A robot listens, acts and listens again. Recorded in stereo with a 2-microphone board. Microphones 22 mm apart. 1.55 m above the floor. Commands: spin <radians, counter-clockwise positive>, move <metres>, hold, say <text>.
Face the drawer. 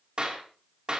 hold
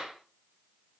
hold
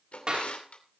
spin 1.13
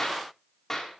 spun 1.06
hold
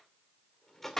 spin 0.26
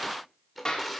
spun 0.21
say Facing the drawer, 2 to 4 m away.